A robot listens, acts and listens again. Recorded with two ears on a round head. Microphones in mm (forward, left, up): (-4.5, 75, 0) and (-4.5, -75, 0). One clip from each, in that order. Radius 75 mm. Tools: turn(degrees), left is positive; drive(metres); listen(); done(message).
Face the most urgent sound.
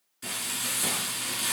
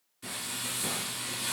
listen()
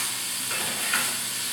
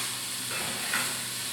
listen()
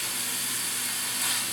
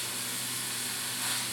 done("I can't make out anything urgent, only frying.")